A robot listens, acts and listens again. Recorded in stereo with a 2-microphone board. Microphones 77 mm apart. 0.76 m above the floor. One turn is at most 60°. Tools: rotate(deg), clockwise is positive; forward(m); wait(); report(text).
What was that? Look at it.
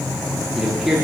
rotate(30)
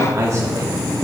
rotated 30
rotate(60)
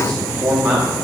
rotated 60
rotate(35)
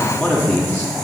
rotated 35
rotate(-15)
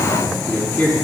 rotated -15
rotate(-20)
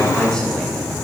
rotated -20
rotate(-10)
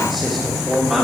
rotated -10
report("Facing the man speaking.")